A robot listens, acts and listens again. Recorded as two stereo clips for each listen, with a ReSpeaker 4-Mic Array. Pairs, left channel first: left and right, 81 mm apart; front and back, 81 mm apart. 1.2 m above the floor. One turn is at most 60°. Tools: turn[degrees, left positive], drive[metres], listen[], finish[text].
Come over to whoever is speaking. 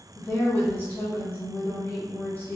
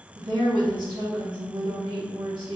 Thought: The woman speaking: 155° left.
Action: turn[60]
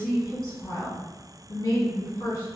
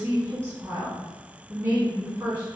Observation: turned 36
Thought: The woman speaking is now 120° left.
Action: turn[60]
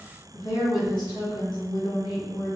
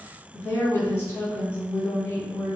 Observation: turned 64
Thought: The woman speaking is now 55° left.
Action: turn[55]
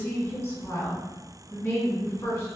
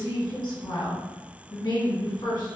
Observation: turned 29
Thought: The woman speaking is now 25° left.
Action: turn[25]
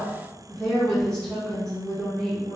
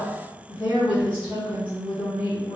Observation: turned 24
Action: drive[1.0]
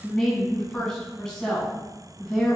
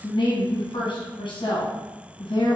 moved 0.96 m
Action: drive[1.0]
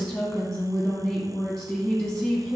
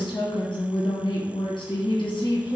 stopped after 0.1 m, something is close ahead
Action: finish[I am next to the woman speaking.]